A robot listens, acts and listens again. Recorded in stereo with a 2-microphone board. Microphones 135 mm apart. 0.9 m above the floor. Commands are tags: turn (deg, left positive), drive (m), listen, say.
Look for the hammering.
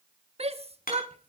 <turn deg="90"/>
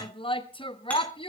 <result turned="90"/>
<listen/>
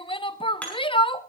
<turn deg="10"/>
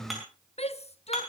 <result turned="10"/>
<say>Facing the hammering, over 4 m away.</say>